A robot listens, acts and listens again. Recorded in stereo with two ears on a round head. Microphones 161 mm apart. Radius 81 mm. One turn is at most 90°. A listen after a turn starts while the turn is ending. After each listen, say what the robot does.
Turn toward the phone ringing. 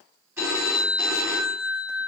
Turn 30° right.
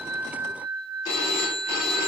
Turn 20° left.
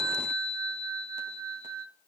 Found it: a phone ringing, straight ahead.